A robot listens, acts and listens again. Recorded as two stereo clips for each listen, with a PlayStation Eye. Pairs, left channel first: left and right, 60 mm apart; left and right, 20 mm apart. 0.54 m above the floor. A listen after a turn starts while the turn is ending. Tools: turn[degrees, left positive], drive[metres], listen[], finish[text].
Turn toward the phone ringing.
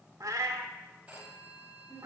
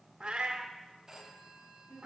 Thought: The phone ringing: about 20° right or 160° right.
Action: turn[-20]
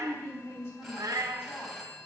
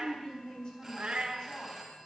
Action: finish[Facing the phone ringing.]